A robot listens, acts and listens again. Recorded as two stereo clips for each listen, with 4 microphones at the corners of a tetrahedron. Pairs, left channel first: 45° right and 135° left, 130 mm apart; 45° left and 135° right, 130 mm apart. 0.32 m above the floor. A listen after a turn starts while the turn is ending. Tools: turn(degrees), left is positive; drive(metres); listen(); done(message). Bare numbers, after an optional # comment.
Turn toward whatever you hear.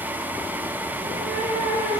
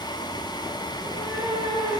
# The cat meowing: 145° left.
turn(145)
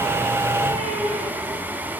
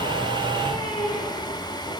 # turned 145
# The cat meowing is now 10° right.
turn(-10)
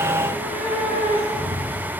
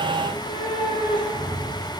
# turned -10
done("Facing the cat meowing, 2 to 4 m away.")